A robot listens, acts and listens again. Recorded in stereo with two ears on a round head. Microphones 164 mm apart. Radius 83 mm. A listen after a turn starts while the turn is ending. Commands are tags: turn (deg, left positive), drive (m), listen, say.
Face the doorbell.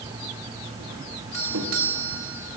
<turn deg="-90"/>
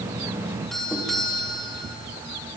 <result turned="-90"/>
<say>Found it: a doorbell, straight ahead.</say>